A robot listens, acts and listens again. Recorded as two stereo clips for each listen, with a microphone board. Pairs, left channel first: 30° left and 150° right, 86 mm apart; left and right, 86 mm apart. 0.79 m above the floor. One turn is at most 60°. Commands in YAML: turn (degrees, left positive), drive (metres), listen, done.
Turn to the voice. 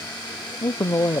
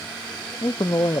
turn: 60
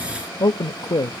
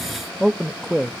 done: "Facing the man speaking, under 1 m away."